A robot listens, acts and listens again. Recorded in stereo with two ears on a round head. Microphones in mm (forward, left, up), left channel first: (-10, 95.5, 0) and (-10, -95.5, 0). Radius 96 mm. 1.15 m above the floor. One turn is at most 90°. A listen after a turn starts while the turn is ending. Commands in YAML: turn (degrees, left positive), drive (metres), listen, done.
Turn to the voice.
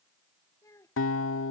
turn: 30
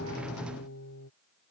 listen: true
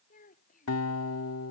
turn: 90
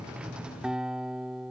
turn: 50
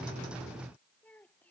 done: "Facing the child speaking."